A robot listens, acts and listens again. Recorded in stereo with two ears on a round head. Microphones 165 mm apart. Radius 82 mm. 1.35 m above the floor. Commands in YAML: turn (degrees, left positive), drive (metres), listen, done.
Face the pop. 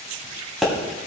turn: 30
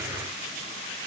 listen: true
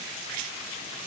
done: "I heard a pop, but can't make it out now. It was about 30° right or 150° left."